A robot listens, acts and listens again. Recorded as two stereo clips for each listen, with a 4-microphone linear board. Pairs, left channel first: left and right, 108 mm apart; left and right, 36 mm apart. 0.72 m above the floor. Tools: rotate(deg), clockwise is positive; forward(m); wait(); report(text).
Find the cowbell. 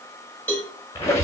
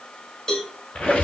rotate(-20)
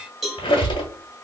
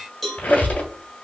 report("Found it: a cowbell, straight ahead, under 1 m away.")